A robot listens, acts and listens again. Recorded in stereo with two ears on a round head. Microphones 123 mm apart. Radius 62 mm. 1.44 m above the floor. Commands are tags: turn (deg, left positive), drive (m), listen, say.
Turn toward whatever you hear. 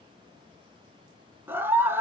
<turn deg="-15"/>
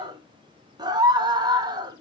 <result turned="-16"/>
<turn deg="-150"/>
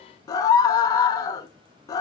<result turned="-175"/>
<turn deg="25"/>
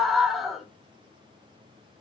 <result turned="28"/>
<say>Found it: a scream, straight ahead, 1 to 2 m away.</say>